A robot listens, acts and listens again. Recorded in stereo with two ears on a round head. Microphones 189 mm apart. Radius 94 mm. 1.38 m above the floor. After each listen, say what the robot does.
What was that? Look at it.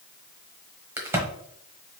Turn 30° right.
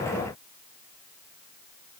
Keep listening.
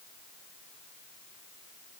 I heard a crack, but can't make it out now. It was about 20° left or 140° right.